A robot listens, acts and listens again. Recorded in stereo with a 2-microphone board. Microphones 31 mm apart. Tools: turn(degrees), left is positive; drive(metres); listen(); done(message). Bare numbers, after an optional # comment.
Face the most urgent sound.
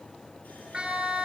# The siren: about 30° right or 150° right.
turn(-30)
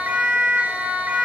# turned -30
# So it is at 115° right.
turn(-115)
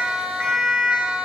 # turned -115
# The siren is now 40° right.
turn(-40)
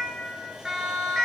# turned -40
# The siren is now 15° right.
turn(-15)
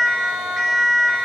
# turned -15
done("Found it: a siren, straight ahead.")